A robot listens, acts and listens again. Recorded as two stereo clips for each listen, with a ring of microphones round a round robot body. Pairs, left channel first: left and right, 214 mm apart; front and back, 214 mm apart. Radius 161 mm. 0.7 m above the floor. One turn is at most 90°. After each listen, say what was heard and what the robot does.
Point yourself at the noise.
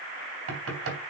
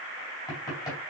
The knocking: 80° right. Turn 80° right.
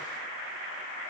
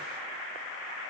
Keep listening.
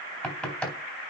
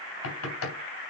Found it: knocking, straight ahead, 2 to 4 m away.